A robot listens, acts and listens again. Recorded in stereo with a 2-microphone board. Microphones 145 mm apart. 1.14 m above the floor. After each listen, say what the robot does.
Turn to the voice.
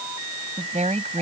Turn 60° right.
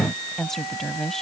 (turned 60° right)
Found it: a woman speaking, straight ahead.